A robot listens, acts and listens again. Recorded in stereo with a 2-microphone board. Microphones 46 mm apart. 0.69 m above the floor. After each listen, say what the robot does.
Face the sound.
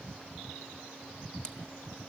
Turn 20° left.
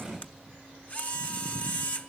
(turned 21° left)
Turn 140° left.
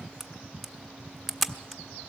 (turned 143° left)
Facing the camera shutter, under 1 m away.